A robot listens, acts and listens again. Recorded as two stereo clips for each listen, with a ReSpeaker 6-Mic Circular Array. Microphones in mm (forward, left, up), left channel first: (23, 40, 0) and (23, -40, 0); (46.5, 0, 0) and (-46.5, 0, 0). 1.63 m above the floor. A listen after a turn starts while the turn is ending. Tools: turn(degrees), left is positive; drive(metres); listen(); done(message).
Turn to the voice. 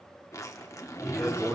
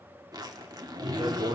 turn(degrees=-165)
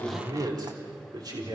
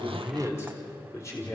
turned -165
turn(degrees=-55)
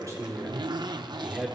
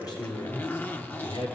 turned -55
turn(degrees=-15)
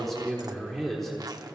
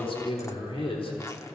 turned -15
done("Facing the man speaking, 2 to 4 m away.")